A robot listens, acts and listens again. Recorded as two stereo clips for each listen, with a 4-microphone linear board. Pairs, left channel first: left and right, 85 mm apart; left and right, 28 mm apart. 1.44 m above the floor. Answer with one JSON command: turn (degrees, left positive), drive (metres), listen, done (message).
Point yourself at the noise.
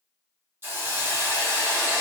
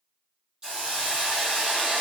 {"turn": -30}
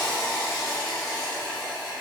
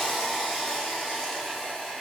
{"done": "Found it: a hiss, straight ahead, 1 to 2 m away."}